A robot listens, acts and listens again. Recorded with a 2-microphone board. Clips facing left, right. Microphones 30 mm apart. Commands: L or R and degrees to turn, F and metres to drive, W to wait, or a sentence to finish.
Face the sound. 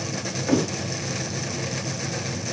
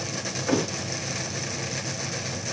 R30
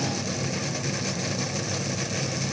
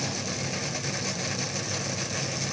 W
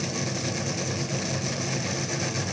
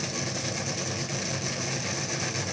I heard a thud, but can't make it out now. It was about 25° left or 145° right.